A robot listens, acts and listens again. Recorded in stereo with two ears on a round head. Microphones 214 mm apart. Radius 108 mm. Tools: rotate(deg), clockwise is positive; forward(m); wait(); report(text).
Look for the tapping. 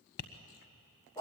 rotate(-45)
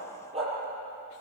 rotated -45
wait()
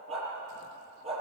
wait()
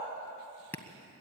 rotate(-10)
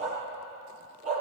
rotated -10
wait()
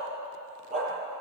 wait()
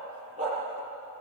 report("I heard tapping from this way, but can't make it out now.")